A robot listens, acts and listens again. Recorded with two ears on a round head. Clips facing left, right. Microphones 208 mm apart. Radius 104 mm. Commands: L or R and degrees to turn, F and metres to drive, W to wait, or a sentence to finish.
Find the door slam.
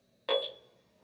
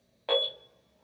W
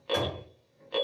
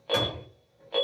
R20
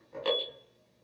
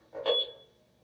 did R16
W
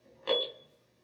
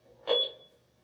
I heard a door slam, but can't make it out now. It was about 5° right or 145° right.